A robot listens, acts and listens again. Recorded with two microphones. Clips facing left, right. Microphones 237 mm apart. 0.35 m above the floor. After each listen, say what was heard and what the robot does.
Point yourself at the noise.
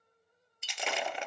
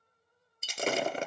The breaking glass: about 40° right or 140° right. Turn 40° right.
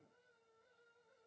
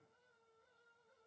Keep listening.
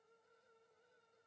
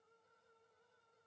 I heard breaking glass, but can't make it out now. It was about straight ahead or 100° right.